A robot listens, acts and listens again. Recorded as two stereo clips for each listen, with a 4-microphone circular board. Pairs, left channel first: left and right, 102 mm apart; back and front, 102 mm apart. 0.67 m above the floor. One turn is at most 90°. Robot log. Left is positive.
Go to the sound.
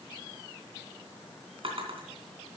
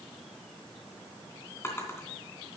note: The drawer: 115° right.
cmd yaw -90
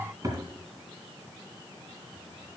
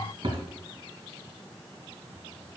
note: The drawer is now 35° right.
cmd yaw -35
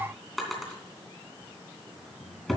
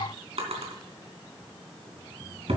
cmd fwd 1.0
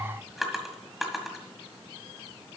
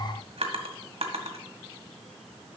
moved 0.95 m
cmd fwd 1.0
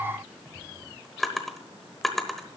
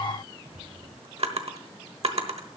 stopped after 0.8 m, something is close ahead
end: I am next to the drawer.